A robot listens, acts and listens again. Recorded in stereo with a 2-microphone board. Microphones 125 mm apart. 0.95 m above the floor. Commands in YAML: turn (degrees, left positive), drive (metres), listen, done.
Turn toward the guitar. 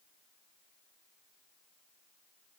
listen: true
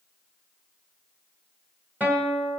turn: -30
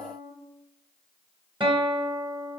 turn: -135
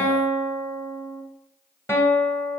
turn: 20
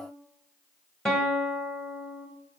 done: "Facing the guitar."